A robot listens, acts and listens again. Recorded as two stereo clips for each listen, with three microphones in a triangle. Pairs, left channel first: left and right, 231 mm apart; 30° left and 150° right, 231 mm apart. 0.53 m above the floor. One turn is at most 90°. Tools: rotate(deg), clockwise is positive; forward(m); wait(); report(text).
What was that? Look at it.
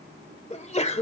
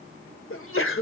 rotate(-35)
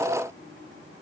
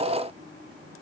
report("I heard a sneeze from this way, but can't make it out now.")